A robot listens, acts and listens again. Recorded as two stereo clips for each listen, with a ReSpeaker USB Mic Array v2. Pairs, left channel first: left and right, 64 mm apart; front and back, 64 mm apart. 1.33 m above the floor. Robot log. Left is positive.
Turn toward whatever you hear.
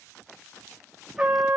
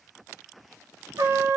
note: The trumpet: 160° right.
cmd yaw -160
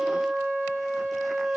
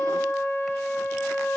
note: The trumpet is now 50° right.
cmd yaw -50
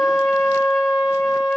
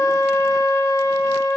end: Facing the trumpet, 1 to 2 m away.